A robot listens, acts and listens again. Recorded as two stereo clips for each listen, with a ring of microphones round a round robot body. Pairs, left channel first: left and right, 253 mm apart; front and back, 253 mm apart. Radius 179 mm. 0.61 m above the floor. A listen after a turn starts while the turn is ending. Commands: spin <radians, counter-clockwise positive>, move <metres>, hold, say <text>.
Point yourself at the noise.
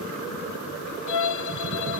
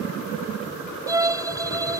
spin 1.83
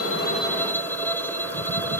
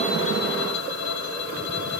say Facing the violin.